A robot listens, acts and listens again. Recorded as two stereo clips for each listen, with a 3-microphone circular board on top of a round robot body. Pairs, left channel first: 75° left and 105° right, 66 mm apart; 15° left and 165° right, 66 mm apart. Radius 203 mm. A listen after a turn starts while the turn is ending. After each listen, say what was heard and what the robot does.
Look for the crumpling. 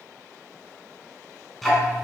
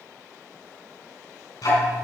Keep listening.
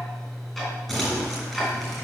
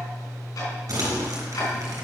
The crumpling: 160° left. Turn 160° left.
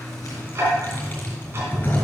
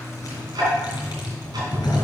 The crumpling is now 15° left. Turn 15° left.
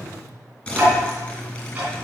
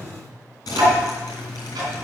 Facing the crumpling, 2 to 4 m away.